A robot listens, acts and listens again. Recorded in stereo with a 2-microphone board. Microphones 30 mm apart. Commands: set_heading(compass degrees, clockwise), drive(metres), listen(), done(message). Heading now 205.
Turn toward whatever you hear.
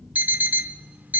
set_heading(275)
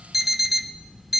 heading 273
done("Found it: an alarm clock, straight ahead.")